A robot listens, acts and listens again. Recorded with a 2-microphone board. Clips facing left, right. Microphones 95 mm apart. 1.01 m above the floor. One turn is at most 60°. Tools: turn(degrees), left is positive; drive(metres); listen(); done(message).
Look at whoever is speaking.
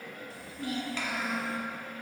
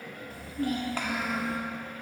turn(degrees=-45)
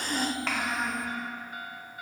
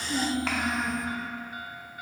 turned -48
done("Facing the child speaking.")